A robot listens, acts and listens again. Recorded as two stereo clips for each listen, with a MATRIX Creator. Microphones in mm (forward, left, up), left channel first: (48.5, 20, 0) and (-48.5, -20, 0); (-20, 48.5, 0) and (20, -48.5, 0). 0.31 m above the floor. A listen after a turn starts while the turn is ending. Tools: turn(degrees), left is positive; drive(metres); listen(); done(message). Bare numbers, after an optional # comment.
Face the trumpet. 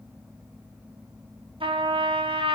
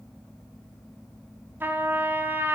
# The trumpet: 135° right.
turn(-135)
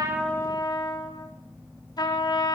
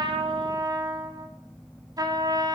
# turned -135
# The trumpet is now 20° right.
turn(-20)
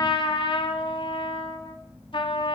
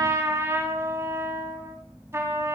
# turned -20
done("Facing the trumpet.")